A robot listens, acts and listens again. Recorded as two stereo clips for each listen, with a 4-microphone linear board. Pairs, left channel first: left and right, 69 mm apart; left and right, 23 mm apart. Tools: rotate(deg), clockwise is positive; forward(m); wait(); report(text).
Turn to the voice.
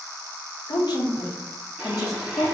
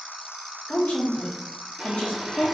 rotate(-60)
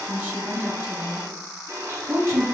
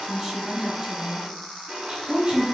rotate(50)
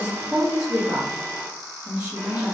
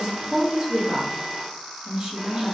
rotate(20)
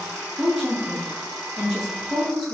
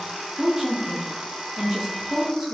rotate(10)
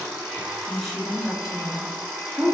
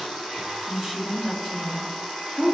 report("Facing the woman speaking, 1 to 2 m away.")